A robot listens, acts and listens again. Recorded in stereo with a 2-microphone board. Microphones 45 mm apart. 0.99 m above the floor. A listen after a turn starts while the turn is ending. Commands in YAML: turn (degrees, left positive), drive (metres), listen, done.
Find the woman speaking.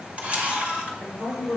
turn: -60
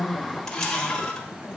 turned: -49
listen: true
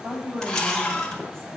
turn: -70
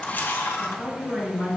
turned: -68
done: "Found it: a woman speaking, straight ahead, over 4 m away."